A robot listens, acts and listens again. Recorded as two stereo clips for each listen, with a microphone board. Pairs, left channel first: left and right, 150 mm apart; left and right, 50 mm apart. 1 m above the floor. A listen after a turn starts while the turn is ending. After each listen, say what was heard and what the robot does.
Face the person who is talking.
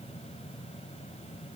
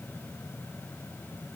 Keep listening.
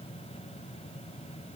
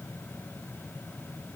Keep listening.
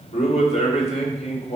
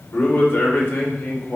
The man speaking: about 50° left or 130° left. Turn 50° left.
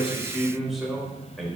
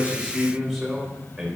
Facing the man speaking.